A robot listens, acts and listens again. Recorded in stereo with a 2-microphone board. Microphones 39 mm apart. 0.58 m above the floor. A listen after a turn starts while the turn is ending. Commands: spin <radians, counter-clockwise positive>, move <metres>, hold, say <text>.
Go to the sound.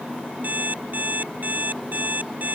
spin -0.96
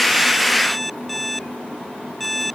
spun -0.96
move 1.0
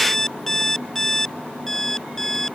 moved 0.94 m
spin 0.17
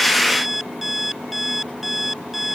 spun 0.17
move 1.0
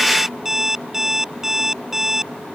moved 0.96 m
spin -0.17
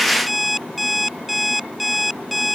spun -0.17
move 1.0
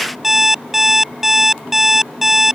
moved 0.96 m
spin -0.17
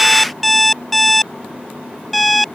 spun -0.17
move 1.0
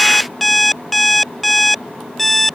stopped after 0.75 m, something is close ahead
say Arrived at the alarm clock, straight ahead.